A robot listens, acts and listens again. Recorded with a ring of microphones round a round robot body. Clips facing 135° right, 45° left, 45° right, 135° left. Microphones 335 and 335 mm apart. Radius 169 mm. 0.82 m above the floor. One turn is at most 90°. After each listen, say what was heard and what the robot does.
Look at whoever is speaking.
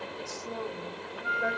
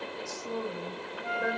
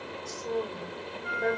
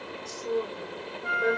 The woman speaking: 55° left. Turn 55° left.
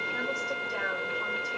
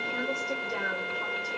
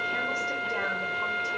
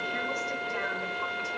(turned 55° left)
Keep listening.
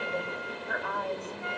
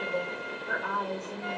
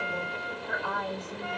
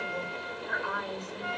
Found it: a woman speaking, straight ahead.